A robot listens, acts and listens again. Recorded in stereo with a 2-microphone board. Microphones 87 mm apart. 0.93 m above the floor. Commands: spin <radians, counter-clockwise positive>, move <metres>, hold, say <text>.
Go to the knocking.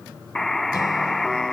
hold
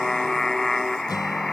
hold
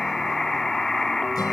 say I can't make out knocking to turn to.